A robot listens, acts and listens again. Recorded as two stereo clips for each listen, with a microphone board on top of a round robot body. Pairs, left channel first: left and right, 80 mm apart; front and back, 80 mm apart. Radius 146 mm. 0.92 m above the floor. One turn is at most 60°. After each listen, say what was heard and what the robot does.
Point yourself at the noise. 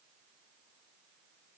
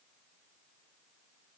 Keep listening.
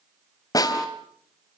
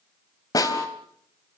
The snare drum: 45° left. Turn 45° left.
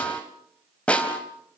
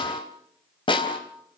The snare drum is now 15° left. Turn 15° left.
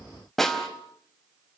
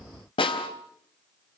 Found it: a snare drum, straight ahead, 2 to 4 m away.